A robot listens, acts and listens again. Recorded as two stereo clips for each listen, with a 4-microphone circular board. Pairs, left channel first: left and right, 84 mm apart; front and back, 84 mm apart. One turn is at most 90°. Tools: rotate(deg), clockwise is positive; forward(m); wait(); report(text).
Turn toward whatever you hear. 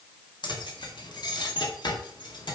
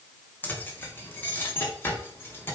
rotate(-65)
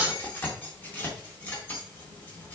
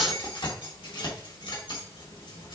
rotate(-20)
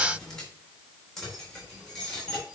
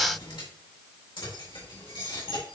report("Found it: keys jangling, straight ahead, 2 to 4 m away.")